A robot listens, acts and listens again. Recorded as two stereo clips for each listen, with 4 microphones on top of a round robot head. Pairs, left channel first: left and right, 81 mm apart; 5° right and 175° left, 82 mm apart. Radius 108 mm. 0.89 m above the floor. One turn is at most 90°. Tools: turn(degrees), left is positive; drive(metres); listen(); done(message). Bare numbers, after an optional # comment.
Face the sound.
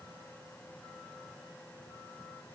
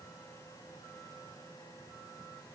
listen()
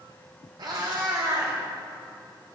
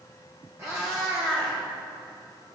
# The cat meowing: 130° right.
turn(-90)
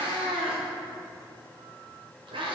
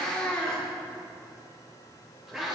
# The cat meowing is now 105° right.
turn(-90)
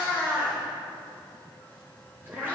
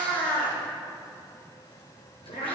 # The cat meowing is now 20° right.
turn(-20)
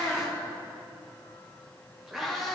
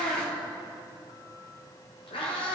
done("Facing the cat meowing, 1 to 2 m away.")